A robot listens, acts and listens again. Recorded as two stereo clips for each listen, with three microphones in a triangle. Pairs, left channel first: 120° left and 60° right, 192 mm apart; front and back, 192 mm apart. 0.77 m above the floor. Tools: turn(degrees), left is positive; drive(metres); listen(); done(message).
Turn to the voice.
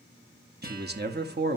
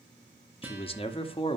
turn(degrees=-55)
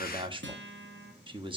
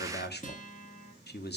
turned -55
done("Found it: a man speaking, straight ahead, 1 to 2 m away.")